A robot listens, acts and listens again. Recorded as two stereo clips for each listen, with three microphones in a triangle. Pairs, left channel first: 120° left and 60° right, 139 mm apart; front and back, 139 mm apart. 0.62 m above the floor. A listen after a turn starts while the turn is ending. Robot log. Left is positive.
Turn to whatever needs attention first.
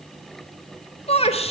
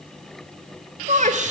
note: The shout: 160° left.
cmd yaw +160
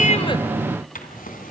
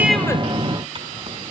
cmd idle
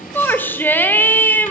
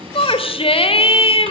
note: The shout is now 45° left.
cmd yaw +45
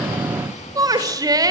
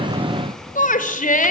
end: Found it: a shout, straight ahead, 2 to 4 m away.